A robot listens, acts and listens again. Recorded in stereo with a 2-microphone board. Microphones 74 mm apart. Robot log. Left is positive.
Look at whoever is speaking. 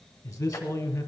note: The man speaking: about 55° left or 125° left.
cmd yaw +55
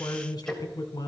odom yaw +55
note: So it is at 65° left.
cmd yaw +65
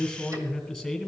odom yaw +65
end: Facing the man speaking.